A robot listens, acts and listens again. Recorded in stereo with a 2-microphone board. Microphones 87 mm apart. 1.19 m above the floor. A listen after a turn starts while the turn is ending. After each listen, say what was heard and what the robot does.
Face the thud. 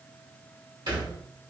The thud: about 60° right or 120° right. Turn 60° right.
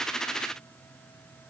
Keep listening.
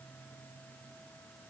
I heard a thud, but can't make it out now. It was about straight ahead or 60° right.